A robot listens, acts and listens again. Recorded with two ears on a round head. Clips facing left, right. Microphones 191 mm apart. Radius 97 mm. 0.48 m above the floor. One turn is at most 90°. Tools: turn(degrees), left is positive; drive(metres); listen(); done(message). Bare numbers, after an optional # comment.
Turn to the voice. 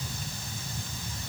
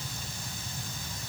listen()
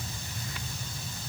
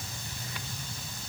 listen()
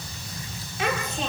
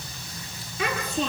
# The child speaking: about 70° right or 110° right.
turn(-70)
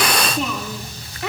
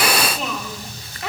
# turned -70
done("Facing the child speaking, over 4 m away.")